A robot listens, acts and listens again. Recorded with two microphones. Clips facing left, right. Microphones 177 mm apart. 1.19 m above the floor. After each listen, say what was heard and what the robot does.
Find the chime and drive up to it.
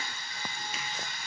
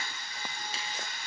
Keep listening.
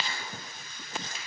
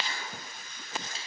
Keep listening.
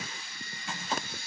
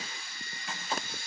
I can't make out a chime to turn to.